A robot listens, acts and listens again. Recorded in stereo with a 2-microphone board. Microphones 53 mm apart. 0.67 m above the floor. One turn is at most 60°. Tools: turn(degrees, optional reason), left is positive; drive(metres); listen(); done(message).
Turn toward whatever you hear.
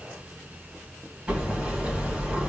turn(degrees=-20, reason="The hammering: about 20° right or 160° right.")
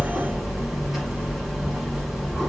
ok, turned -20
done("Facing the hammering, 2 to 4 m away.")